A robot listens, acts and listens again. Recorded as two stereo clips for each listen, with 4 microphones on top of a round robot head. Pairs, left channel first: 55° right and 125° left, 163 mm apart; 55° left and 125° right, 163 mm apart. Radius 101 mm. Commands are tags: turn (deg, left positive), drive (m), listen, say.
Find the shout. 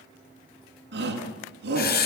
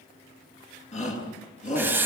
<turn deg="105"/>
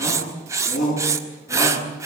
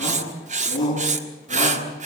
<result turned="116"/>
<turn deg="-10"/>
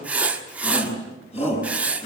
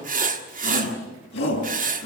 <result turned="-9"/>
<say>Facing the shout.</say>